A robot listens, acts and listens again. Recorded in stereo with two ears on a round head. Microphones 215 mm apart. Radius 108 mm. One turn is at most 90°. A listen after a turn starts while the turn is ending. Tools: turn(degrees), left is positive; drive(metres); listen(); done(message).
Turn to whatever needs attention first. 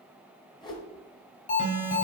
turn(degrees=30)
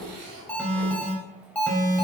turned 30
done("Found it: an alarm, straight ahead.")